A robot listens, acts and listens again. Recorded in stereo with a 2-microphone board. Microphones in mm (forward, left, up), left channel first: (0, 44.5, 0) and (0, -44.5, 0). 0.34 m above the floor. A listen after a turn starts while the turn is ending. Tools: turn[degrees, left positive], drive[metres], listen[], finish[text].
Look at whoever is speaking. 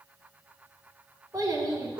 Thought: The child speaking: about 45° right or 135° right.
Action: turn[-45]
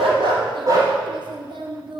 Thought: So it is at 85° right.
Action: turn[-85]
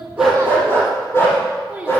Thought: The child speaking is now 20° right.
Action: turn[-20]
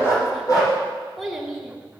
Action: finish[Found it: a child speaking, straight ahead.]